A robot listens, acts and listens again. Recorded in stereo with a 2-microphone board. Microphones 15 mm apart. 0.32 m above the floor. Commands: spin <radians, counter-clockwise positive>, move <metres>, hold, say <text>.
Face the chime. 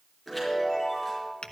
spin 0.52
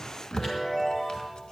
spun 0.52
spin 2.71
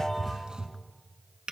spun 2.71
hold
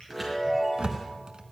say Found it: a chime, straight ahead, over 4 m away.